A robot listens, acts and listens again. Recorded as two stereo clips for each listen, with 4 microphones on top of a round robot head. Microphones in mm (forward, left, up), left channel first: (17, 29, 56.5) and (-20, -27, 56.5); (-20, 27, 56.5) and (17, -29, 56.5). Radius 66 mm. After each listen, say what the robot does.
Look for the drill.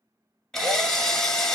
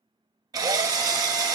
Turn 25° right.
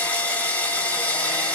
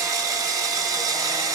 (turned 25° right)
Turn 15° right.
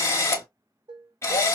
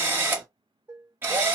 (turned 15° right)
Found it: a drill, straight ahead.